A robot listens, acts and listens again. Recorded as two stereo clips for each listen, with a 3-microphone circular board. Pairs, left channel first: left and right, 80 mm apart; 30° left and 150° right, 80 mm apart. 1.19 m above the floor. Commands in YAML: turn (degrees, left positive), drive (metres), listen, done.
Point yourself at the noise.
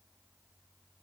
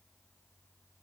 listen: true
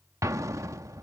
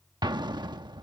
turn: -135
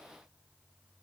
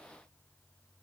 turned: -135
done: "I heard an explosion from this way, but can't make it out now."